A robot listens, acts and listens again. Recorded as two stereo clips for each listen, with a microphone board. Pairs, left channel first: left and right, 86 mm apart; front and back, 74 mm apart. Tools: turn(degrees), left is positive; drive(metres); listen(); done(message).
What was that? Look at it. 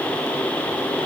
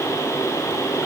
listen()
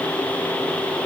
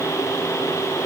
listen()
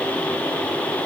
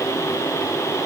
done("I can't make out anything to turn to.")